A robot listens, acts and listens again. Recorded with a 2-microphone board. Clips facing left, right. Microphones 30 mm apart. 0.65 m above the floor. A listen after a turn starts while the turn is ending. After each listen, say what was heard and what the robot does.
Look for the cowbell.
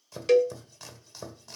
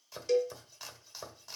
The cowbell: about 75° left or 105° left. Turn 75° left.
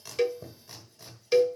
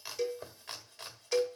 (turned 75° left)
So it is at 30° left. Turn 30° left.
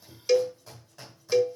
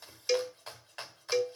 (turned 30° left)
Found it: a cowbell, straight ahead.